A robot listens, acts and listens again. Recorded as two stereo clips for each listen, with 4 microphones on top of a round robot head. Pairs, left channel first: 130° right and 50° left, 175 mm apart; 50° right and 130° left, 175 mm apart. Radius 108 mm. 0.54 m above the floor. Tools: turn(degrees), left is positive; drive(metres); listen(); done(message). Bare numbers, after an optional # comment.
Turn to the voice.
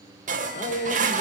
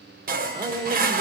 # The man speaking: 170° right.
turn(-170)
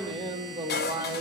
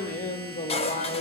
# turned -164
# The man speaking is now 10° right.
turn(-10)
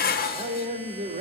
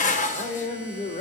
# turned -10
done("Found it: a man speaking, straight ahead.")